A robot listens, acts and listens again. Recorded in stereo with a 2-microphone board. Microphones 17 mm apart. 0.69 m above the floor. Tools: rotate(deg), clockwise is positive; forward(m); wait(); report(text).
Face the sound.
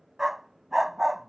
rotate(20)
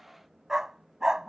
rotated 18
rotate(145)
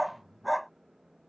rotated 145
report("Found it: a dog barking, straight ahead.")